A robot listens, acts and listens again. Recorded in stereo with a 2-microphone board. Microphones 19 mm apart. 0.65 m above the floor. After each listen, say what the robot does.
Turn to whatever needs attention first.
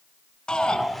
Turn 55° left.
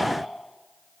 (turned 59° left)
Keep listening.
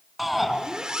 Facing the shout.